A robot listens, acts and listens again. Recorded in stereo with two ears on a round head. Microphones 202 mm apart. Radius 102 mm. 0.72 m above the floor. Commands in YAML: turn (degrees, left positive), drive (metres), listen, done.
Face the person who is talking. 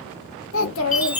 turn: 60
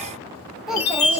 done: "Facing the child speaking."